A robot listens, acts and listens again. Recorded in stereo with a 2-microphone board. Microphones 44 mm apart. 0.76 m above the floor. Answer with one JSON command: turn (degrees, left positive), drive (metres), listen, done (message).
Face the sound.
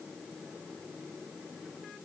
{"listen": true}
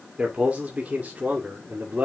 {"turn": -40}
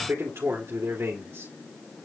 {"turn": -105}
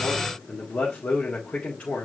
{"turn": 30}
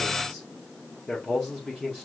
{"turn": 10}
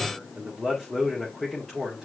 {"done": "Facing the man speaking, 2 to 4 m away."}